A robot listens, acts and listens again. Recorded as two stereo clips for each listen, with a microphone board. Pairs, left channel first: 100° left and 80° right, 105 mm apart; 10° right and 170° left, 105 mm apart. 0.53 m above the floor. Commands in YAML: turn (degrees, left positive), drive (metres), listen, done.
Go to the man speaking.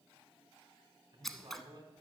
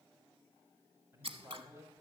turn: -130
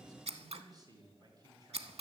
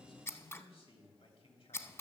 turn: -30
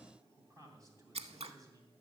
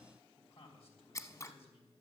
turn: -25
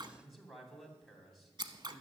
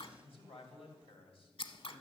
turn: 10
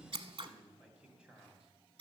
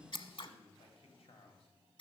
drive: 1.0
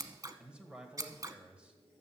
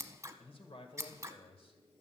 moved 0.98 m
drive: 1.0
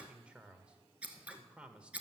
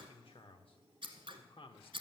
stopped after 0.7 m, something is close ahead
done: "Arrived at the man speaking, straight ahead."